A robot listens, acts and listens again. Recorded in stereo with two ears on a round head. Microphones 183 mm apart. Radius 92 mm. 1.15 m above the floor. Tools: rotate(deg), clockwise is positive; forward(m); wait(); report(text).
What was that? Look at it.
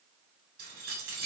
rotate(50)
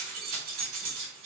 rotate(75)
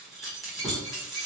report("Facing the keys jangling, 1 to 2 m away.")